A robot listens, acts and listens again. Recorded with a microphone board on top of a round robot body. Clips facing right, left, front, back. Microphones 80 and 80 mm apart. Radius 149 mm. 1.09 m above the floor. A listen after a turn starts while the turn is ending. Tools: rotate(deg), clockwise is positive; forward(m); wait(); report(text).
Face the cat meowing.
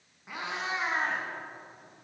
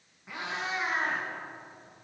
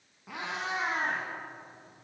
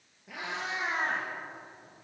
rotate(30)
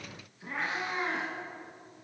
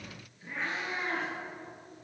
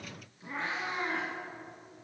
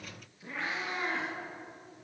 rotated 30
rotate(70)
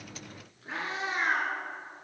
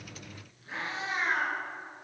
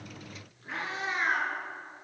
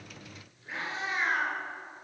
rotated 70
rotate(45)
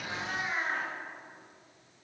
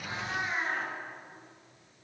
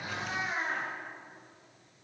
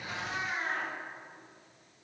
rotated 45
rotate(15)
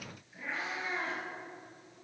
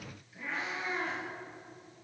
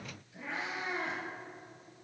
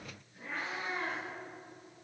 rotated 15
report("Found it: a cat meowing, straight ahead.")